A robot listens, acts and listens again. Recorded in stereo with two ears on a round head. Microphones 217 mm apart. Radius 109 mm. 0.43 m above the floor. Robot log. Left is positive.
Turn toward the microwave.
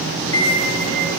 note: The microwave: about 65° left or 115° left.
cmd yaw +65
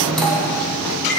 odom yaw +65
end: Facing the microwave, 2 to 4 m away.